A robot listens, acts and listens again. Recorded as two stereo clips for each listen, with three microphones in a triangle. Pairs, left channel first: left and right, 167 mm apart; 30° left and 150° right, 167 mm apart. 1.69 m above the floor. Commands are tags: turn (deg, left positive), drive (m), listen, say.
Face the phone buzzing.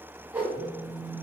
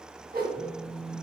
<turn deg="45"/>
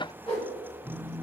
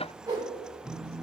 <say>Found it: a phone buzzing, straight ahead.</say>